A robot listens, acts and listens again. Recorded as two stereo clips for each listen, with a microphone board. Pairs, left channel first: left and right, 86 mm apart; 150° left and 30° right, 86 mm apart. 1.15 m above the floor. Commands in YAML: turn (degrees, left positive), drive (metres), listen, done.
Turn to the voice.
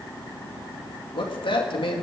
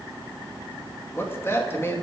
turn: 90
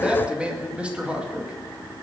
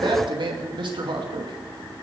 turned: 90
turn: -15
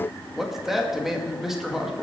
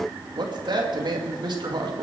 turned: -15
done: "Found it: a man speaking, straight ahead, 2 to 4 m away."